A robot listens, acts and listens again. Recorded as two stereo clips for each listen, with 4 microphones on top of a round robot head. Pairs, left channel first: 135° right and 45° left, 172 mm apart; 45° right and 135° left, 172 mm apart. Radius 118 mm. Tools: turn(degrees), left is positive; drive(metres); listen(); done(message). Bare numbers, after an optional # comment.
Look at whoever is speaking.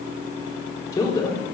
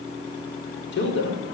# The man speaking: 60° right.
turn(-60)
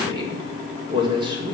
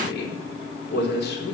# The man speaking is now 20° right.
turn(-20)
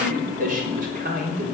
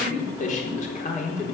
done("Facing the man speaking.")